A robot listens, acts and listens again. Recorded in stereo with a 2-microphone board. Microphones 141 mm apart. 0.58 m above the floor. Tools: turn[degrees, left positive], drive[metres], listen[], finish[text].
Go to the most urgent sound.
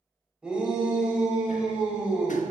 Action: turn[-30]
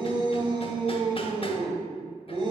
Thought: So it is at 140° right.
Action: turn[-140]
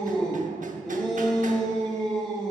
Action: drive[1.0]
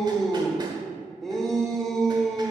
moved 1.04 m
Action: drive[1.0]
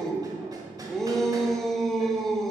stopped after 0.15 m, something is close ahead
Action: finish[I am next to the shout.]